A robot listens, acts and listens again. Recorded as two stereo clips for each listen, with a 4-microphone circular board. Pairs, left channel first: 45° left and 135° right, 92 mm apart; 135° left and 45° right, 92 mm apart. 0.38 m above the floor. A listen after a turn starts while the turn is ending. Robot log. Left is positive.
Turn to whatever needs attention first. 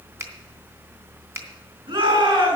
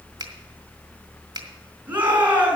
note: The shout: 115° right.
cmd yaw -115
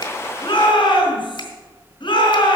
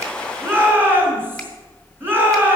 note: The shout is now 20° left.
cmd yaw +20
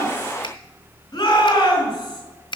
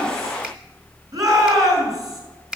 end: Facing the shout, over 4 m away.